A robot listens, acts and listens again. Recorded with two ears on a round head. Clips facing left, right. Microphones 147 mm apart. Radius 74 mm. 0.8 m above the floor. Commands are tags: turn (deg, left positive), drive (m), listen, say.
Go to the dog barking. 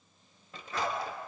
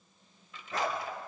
<turn deg="-40"/>
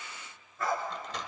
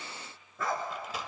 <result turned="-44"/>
<turn deg="-95"/>
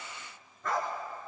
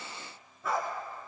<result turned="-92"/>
<drive m="1.0"/>
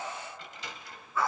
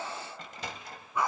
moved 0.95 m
<turn deg="-15"/>
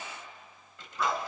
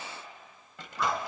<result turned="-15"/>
<drive m="1.0"/>
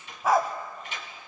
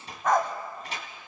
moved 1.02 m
<drive m="1.0"/>
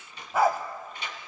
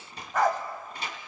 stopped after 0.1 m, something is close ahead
<turn deg="10"/>
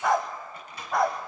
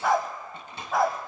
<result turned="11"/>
<say>Arrived at the dog barking, straight ahead.</say>